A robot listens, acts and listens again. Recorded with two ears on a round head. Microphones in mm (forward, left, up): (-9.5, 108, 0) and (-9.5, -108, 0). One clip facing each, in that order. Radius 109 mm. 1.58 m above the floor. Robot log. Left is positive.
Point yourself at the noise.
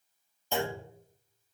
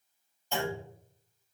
cmd yaw +90
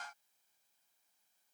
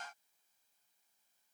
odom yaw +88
end: I heard a clunk from this way, but can't make it out now.